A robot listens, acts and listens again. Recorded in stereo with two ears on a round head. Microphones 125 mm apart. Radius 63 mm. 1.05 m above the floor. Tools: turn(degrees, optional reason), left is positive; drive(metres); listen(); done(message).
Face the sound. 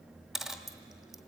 turn(degrees=30)
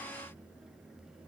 listen()
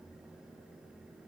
done("I heard a dropped coin, but can't make it out now. It was about 30° right or 150° left.")